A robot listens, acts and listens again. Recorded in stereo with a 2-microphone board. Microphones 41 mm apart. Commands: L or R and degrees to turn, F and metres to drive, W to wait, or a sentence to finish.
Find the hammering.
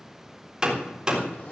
R20
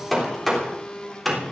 Facing the hammering, 2 to 4 m away.